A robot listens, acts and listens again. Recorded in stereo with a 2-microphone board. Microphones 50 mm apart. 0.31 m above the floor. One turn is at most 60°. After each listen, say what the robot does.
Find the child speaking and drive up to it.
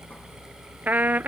Keep listening.
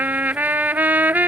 Keep listening.
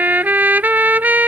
I can't make out a child speaking, only a trumpet.